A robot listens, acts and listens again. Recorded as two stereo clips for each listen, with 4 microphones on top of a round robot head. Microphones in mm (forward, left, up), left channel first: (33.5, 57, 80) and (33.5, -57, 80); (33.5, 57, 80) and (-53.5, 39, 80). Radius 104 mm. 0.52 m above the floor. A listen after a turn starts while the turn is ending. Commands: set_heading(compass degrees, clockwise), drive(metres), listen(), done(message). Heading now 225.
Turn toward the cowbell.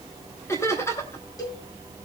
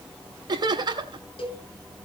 set_heading(195)
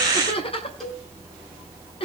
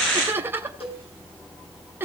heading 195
done("Found it: a cowbell, straight ahead.")